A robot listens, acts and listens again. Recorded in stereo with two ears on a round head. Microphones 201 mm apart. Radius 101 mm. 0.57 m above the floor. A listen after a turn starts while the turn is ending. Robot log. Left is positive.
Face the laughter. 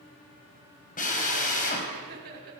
note: The laughter: about 45° right or 135° right.
cmd yaw -45
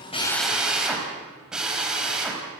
cmd idle
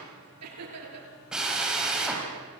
note: So it is at 85° right.
cmd yaw -85
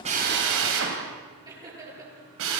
note: The laughter is now 15° right.
cmd yaw -15
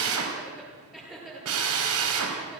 end: Facing the laughter, over 4 m away.